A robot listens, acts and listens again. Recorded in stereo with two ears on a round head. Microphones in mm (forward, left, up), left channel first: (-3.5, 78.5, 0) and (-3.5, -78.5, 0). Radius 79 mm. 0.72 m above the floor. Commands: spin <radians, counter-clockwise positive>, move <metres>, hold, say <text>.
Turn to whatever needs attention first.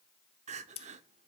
spin -0.70
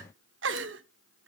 spin -1.75
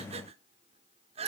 spin -0.61
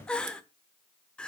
say Facing the crying.